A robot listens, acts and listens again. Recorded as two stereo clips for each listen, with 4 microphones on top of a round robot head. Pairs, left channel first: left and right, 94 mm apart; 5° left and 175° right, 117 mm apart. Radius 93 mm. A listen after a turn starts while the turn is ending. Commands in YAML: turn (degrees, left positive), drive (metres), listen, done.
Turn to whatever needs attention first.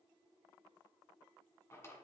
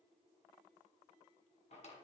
listen: true
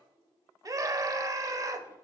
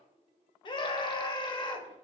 turn: -45
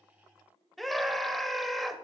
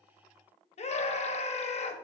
done: "Found it: a scream, straight ahead."